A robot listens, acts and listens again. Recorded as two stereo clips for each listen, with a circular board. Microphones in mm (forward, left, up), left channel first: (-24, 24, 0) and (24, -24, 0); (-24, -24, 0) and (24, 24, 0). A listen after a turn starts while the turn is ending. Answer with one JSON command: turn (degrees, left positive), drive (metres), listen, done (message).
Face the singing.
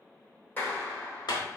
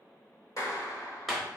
{"listen": true}
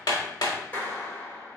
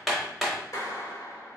{"listen": true}
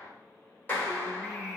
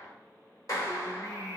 {"turn": -145}
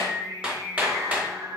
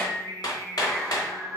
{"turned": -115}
{"turn": -55}
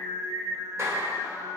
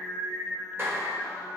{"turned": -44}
{"turn": -20}
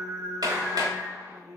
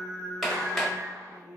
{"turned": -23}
{"done": "Found it: singing, straight ahead, 1 to 2 m away."}